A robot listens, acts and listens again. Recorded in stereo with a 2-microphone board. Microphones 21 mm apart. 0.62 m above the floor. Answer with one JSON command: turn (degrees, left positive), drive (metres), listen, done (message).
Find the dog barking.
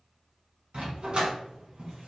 {"turn": -55}
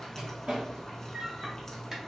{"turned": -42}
{"turn": -20}
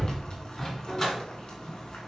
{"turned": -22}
{"turn": 20}
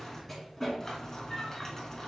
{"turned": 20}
{"turn": 10}
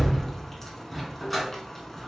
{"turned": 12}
{"done": "Found it: a dog barking, straight ahead."}